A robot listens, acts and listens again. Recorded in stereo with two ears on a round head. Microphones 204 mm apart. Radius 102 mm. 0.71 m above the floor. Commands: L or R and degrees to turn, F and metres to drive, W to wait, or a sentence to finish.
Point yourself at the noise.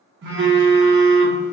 R50
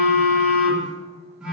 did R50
Found it: a phone buzzing, straight ahead.